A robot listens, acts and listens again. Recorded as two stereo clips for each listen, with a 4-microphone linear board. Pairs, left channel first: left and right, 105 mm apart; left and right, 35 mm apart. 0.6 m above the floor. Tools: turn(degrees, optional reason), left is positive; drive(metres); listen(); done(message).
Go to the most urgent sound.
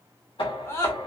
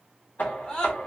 turn(degrees=25, reason="The scream: about 25° left or 155° left.")
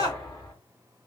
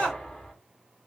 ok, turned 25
turn(degrees=125, reason="So it is at 125° left.")
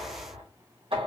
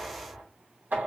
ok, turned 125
listen()
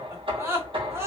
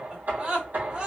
turn(degrees=-30, reason="The scream is now 30° right.")
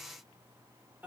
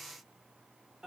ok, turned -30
listen()
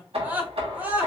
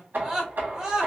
turn(degrees=-20, reason="The scream is now 20° right.")
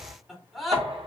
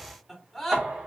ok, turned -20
drive(metres=1.0)
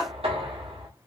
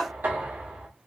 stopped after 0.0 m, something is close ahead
done("Blocked. The scream is further on, straight ahead.")